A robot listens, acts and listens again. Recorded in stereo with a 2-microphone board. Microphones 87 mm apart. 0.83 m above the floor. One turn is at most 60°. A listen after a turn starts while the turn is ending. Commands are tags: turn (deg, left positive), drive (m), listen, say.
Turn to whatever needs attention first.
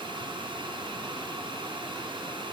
<listen/>
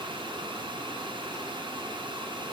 <listen/>
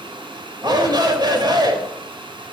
<turn deg="-50"/>
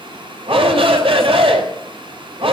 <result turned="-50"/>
<turn deg="-60"/>
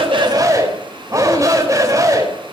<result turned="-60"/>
<turn deg="-35"/>
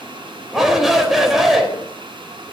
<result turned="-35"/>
<say>Found it: a shout, straight ahead, over 4 m away.</say>